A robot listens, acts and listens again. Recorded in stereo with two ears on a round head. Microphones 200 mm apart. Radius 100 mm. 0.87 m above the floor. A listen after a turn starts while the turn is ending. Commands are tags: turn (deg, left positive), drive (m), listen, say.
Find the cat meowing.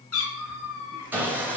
<turn deg="75"/>
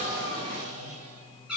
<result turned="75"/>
<say>Facing the cat meowing.</say>